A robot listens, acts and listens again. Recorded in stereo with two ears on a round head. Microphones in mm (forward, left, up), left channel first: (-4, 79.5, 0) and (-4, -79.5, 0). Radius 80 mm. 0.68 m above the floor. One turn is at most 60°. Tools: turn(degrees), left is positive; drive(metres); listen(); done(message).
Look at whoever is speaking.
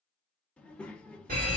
turn(degrees=30)
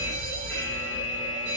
listen()
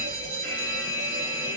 listen()
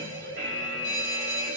done("I heard a child speaking, but can't make it out now. It was about 25° right or 145° left.")